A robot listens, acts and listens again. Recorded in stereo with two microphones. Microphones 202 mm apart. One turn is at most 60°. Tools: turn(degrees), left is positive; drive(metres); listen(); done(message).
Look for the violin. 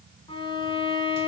turn(degrees=25)
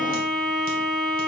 done("Found it: a violin, straight ahead.")